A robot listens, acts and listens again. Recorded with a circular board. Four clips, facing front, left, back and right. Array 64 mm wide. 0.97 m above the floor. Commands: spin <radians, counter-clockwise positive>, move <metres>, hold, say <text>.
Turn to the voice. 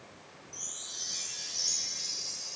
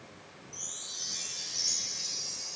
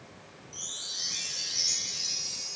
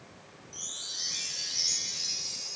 hold
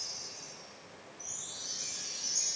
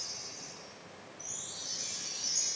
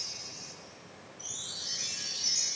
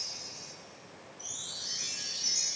hold
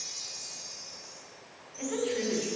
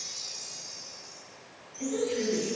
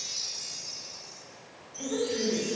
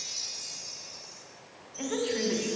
spin -1.31
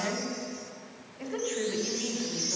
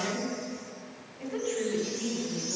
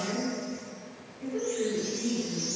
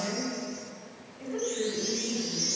say Facing the woman speaking, 2 to 4 m away.